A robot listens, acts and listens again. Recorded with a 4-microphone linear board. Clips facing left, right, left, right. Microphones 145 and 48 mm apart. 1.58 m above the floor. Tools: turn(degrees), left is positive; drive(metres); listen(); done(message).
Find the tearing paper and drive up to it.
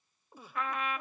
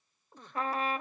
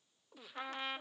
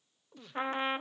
listen()
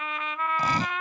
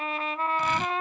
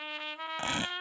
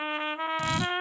turn(degrees=40)
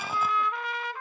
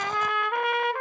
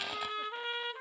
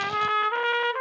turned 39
listen()
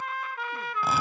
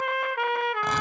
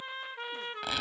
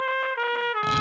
listen()
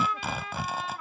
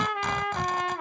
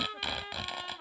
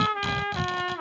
drive(metres=1.0)
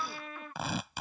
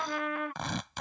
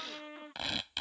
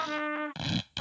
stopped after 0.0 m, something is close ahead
done("Something is in my way. I am facing the tearing paper but have not reached it.")